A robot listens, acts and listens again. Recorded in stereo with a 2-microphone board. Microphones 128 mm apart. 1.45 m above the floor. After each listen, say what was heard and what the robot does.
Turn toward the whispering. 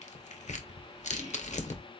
The whispering: about 70° right or 110° right. Turn 70° right.
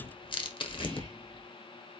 So it is at 40° right. Turn 40° right.
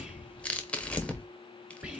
The whispering is now 10° right. Turn 10° right.
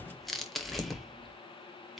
Facing the whispering.